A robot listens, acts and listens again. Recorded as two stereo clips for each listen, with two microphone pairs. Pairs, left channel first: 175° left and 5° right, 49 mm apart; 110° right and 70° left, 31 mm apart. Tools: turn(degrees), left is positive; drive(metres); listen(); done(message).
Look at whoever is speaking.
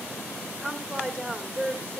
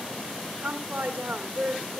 turn(degrees=65)
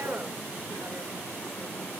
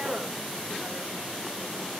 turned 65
listen()
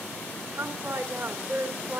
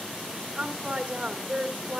turn(degrees=10)
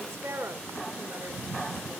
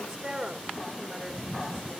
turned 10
done("Facing the woman speaking.")